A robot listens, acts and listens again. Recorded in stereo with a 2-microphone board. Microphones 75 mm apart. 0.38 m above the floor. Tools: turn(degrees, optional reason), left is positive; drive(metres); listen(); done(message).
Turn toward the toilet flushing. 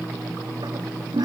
turn(degrees=-75, reason="The toilet flushing: about 75° right or 105° right.")
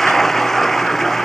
done("Found it: a toilet flushing, straight ahead.")